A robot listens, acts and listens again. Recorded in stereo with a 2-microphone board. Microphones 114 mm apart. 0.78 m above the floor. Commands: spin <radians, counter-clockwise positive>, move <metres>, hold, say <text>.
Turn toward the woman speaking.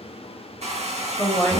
spin 0.52
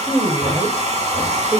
spin -0.61
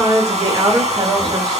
spin -0.70
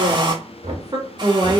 spin -0.70
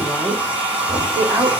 spin -0.26
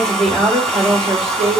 say Facing the woman speaking.